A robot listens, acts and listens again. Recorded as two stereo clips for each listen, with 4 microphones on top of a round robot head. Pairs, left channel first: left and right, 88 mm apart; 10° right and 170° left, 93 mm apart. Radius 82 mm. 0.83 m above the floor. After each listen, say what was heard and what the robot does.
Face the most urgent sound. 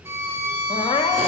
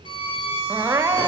The crying: 105° left. Turn 105° left.
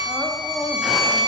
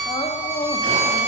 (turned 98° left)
Found it: crying, straight ahead.